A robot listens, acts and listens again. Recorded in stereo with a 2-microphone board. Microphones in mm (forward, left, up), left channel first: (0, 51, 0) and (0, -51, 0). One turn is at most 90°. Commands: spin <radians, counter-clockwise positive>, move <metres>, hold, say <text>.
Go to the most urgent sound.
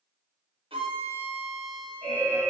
spin 0.52
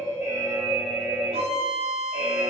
spin -0.26
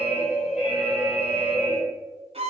move 1.0
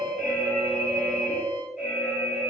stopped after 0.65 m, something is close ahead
say I am next to the alarm.